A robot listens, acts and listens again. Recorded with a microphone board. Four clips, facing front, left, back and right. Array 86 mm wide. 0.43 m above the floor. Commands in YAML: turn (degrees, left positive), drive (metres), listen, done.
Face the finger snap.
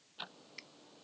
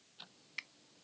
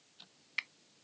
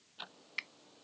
turn: -160
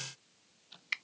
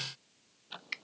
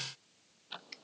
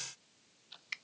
turn: 15
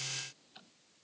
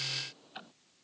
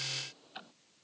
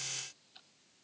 listen: true
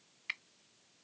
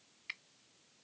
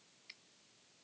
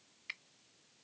done: "Facing the finger snap."